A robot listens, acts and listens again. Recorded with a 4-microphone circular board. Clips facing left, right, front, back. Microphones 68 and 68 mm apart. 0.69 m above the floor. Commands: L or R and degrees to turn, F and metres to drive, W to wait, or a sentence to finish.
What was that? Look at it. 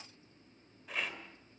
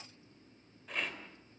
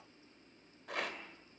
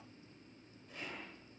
Facing the rattle, 2 to 4 m away.